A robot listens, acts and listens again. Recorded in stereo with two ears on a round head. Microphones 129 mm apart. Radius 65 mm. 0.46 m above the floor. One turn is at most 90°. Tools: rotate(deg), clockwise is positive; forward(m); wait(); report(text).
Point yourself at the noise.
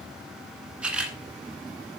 rotate(30)
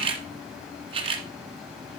rotate(90)
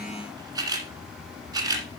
rotate(25)
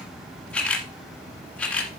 rotate(-10)
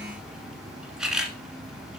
report("Facing the camera shutter.")